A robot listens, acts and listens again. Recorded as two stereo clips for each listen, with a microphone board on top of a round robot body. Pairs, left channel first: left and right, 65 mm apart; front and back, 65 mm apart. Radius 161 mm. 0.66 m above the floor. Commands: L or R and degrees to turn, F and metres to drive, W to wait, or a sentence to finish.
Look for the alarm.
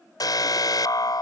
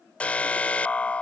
L70
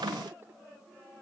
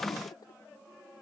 W
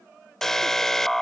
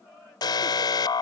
Found it: an alarm, straight ahead.